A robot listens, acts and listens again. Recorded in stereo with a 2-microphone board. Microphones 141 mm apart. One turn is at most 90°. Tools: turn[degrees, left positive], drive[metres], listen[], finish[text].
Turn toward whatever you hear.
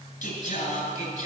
Action: turn[90]
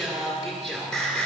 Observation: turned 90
Action: finish[Facing the singing, 2 to 4 m away.]